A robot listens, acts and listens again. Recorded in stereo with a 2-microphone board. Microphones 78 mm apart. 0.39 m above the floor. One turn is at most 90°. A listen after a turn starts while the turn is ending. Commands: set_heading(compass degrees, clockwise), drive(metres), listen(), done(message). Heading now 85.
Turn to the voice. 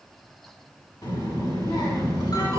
set_heading(15)
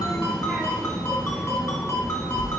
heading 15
done("Found it: a child speaking, straight ahead, 2 to 4 m away.")